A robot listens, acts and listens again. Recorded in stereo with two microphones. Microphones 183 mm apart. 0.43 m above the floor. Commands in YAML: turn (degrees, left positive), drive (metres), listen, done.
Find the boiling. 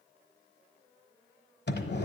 listen: true
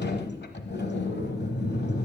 listen: true
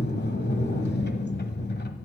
done: "I can't make out boiling, only a sliding door."